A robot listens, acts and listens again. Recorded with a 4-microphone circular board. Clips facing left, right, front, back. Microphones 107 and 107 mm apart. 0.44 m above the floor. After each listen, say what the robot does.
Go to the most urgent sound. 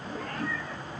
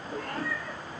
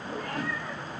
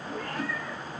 Keep listening.
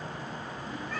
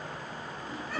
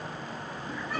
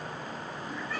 Keep listening.
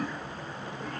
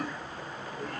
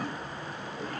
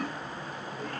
I can't make out anything urgent, only a cat meowing.